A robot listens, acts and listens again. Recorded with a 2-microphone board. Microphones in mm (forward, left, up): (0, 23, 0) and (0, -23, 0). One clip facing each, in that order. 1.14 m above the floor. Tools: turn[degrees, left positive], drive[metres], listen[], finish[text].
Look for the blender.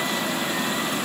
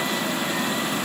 Action: listen[]
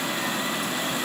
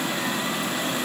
Action: listen[]
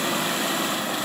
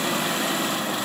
Action: finish[I can't make out a blender.]